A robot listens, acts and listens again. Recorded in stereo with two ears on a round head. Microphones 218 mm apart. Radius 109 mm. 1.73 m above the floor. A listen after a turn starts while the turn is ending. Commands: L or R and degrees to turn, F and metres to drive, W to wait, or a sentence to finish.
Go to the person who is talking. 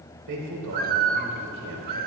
R90
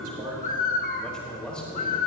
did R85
F1.0
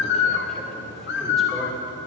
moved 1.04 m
W
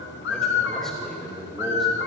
F1.0
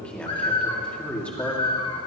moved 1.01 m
F1.0
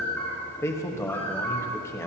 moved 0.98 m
L10
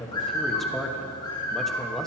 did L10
F1.0
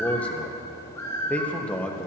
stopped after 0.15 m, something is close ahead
I am next to the man speaking.